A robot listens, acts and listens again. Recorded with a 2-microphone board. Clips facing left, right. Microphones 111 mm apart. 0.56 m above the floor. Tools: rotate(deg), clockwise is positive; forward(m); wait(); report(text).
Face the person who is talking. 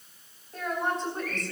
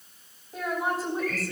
rotate(30)
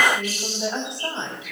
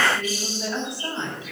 rotate(-25)
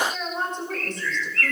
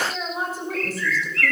report("Found it: a woman speaking, straight ahead, over 4 m away.")